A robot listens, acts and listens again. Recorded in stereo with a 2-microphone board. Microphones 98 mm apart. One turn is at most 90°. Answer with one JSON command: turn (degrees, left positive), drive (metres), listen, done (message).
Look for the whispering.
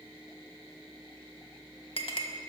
{"listen": true}
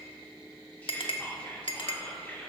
{"turn": 15}
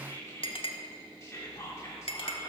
{"turn": 90}
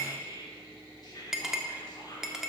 {"turn": 55}
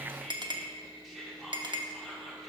{"done": "Facing the whispering, 1 to 2 m away."}